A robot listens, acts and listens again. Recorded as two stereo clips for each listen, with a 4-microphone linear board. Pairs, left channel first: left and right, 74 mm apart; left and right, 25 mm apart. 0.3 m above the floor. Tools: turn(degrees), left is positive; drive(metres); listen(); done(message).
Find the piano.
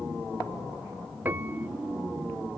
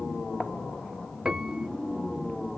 turn(degrees=-25)
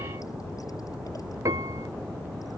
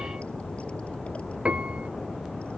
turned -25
turn(degrees=-130)
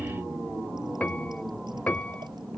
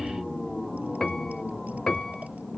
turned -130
turn(degrees=20)
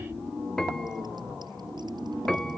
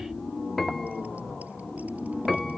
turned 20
done("Facing the piano.")